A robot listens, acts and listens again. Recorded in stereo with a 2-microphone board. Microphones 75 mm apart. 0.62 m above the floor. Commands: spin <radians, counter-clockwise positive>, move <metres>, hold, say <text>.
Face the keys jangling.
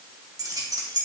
spin -0.96
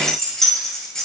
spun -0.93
spin 0.17
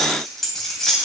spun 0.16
say Facing the keys jangling, 2 to 4 m away.